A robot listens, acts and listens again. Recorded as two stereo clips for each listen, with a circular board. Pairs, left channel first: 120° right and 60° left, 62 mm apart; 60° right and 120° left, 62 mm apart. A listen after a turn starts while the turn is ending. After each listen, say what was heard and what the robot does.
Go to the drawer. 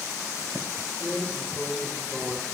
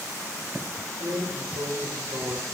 The drawer: 140° left. Turn 140° left.
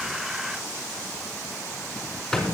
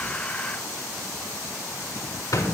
The drawer is now 35° right. Turn 35° right.
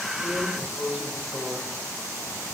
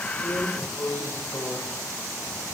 The drawer is now 10° right. Turn 10° right.
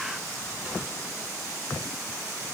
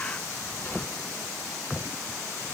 Keep listening.
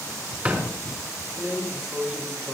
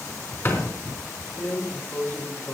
Drive 1.0 m forward.
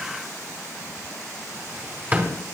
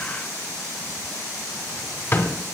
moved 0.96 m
Drive 1.0 m forward.
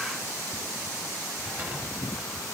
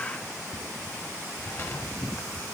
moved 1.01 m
Drive 1.0 m forward.
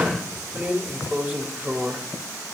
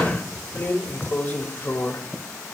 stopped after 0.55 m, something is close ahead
Arrived at the drawer, straight ahead.